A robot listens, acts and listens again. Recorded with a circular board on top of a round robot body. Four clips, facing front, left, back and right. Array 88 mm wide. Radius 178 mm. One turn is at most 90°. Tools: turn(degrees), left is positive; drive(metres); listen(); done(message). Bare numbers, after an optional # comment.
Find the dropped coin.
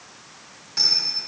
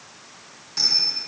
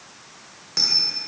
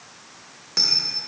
# The dropped coin: 125° right.
turn(-90)
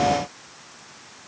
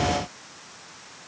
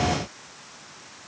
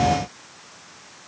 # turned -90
# Nothing new. It was at 35° right.
turn(-35)
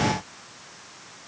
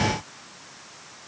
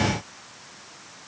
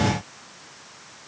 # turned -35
done("Facing where the dropped coin came from. I can't hear it now.")